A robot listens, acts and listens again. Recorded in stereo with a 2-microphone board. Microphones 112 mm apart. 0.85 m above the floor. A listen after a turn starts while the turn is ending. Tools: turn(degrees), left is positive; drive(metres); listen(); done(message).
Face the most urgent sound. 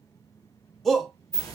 turn(degrees=30)
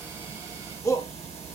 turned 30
turn(degrees=150)
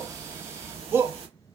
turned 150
turn(degrees=-25)
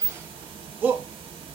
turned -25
turn(degrees=-20)
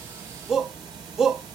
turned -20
done("Found it: a shout, straight ahead.")